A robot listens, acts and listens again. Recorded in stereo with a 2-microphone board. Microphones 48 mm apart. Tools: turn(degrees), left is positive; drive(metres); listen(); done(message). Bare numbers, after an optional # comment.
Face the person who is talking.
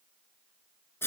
listen()
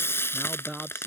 turn(-30)
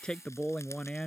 # So it is at 20° left.
turn(20)
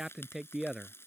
# The man speaking is now 10° right.
turn(-10)
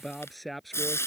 done("Facing the man speaking.")